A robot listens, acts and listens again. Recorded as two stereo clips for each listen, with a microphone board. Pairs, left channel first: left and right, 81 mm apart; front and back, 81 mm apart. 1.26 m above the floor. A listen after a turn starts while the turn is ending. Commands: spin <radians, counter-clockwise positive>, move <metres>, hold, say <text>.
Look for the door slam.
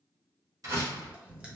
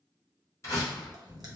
spin -0.87
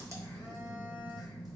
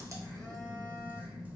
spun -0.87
say Facing where the door slam came from. I can't hear it now.